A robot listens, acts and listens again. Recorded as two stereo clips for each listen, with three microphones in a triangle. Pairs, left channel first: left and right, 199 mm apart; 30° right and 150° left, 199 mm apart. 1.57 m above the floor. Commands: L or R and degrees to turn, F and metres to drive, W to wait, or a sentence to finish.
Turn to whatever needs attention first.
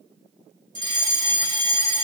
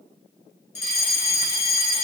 L25
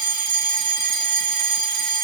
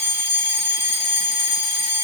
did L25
Found it: a fire alarm, straight ahead, 2 to 4 m away.